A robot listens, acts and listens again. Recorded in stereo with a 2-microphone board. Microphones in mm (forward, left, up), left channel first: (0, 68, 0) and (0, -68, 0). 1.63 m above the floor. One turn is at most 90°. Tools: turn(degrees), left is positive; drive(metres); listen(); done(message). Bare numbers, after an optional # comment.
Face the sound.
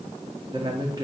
# The man speaking: about 35° right or 145° right.
turn(-35)
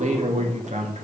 # So it is at 120° right.
turn(-90)
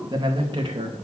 # The man speaking is now 40° right.
turn(-40)
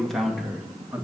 # The man speaking is now 10° right.
turn(-10)
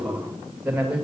# The man speaking is now 10° right.
turn(-10)
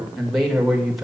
done("Facing the man speaking, 2 to 4 m away.")